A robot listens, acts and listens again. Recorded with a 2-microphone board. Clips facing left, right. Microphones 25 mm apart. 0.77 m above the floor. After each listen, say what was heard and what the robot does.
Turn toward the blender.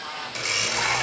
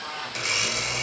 Turn 30° left.
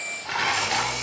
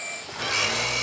So it is at 30° right. Turn 30° right.
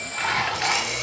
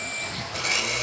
The blender is now 10° right. Turn 10° right.
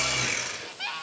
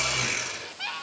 Found it: a blender, straight ahead.